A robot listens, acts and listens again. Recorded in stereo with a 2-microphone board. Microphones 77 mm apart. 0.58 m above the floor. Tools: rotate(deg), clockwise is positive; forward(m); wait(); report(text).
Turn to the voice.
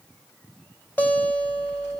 wait()
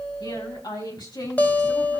rotate(-90)
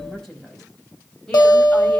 rotate(-10)
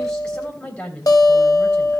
rotate(-15)
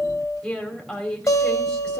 report("Found it: a woman speaking, straight ahead.")